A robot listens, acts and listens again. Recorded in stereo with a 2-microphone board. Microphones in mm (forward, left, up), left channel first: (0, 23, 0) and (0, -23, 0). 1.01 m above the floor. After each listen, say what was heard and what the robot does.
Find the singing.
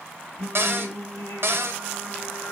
The singing: about 50° left or 130° left. Turn 50° left.
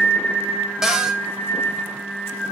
So it is at 75° left. Turn 75° left.
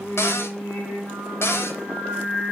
The singing is now 30° left. Turn 30° left.
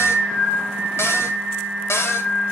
The singing is now 15° left. Turn 15° left.
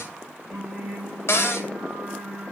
Facing the singing, 2 to 4 m away.